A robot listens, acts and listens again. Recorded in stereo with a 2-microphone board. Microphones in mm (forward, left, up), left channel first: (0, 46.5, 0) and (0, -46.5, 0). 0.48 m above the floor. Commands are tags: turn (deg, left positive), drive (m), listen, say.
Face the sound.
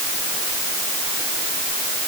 <listen/>
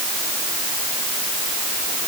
<listen/>
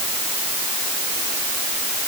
<say>I can't make out anything.</say>